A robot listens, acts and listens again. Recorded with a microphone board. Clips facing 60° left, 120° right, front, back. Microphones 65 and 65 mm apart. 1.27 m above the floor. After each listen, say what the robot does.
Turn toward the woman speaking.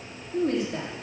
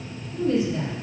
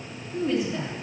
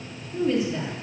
Turn 90° left.
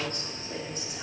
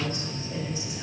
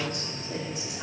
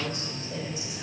Turn 20° left.
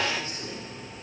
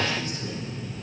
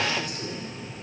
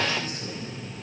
Keep listening.
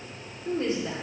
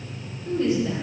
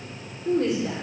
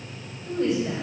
Facing the woman speaking, over 4 m away.